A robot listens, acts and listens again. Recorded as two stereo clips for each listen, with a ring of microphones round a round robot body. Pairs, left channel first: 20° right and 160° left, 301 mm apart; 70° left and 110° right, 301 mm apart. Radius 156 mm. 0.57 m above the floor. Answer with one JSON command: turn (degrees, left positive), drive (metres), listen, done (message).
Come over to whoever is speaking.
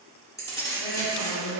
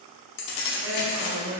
{"turn": -60}
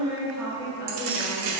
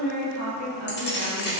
{"drive": 1.0}
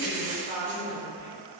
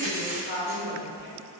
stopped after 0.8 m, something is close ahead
{"turn": 25}
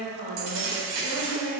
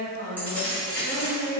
{"turn": 10}
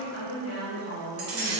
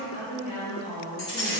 {"done": "Arrived at the woman speaking, straight ahead."}